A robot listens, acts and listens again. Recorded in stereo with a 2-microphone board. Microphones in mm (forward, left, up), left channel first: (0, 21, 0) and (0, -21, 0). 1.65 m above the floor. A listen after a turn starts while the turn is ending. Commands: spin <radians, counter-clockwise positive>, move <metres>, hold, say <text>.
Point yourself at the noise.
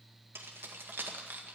spin -0.79
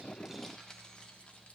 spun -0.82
spin 0.35
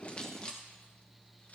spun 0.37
spin 0.52
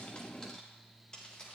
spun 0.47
spin 0.44
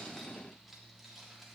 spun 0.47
hold
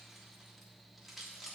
say Found it: keys jangling, straight ahead.